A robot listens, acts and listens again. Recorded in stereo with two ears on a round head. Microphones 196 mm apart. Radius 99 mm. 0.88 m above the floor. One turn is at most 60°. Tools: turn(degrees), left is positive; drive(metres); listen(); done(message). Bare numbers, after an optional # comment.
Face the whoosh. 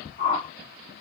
# The whoosh: about 30° left or 150° left.
turn(30)
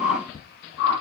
# So it is at 120° left.
turn(60)
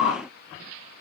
# The whoosh is now 70° left.
turn(60)
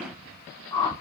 # The whoosh is now 15° left.
turn(15)
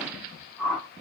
done("Found it: a whoosh, straight ahead.")